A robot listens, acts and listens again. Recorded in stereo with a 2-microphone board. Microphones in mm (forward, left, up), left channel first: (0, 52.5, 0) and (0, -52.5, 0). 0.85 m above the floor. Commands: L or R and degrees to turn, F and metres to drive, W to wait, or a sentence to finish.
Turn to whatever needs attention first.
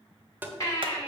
L35
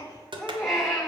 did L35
Facing the baby crying, 2 to 4 m away.